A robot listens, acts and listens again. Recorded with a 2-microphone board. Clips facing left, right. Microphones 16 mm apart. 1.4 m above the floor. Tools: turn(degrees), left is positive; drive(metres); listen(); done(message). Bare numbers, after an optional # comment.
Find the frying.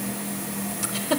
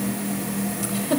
listen()
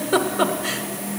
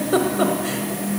listen()
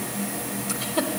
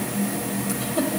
done("I can't make out frying, only a giggle.")